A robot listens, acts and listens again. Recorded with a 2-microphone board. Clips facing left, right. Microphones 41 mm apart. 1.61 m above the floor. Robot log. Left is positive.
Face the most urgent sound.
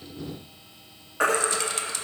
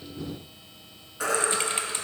note: The baby crying: about 50° left or 130° left.
cmd yaw +50
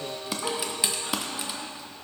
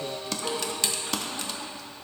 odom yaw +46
cmd idle
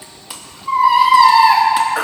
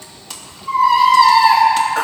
note: So it is at 15° left.
cmd yaw +15
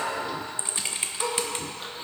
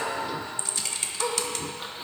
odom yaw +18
cmd idle
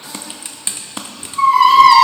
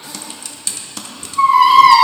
end: Found it: a baby crying, straight ahead.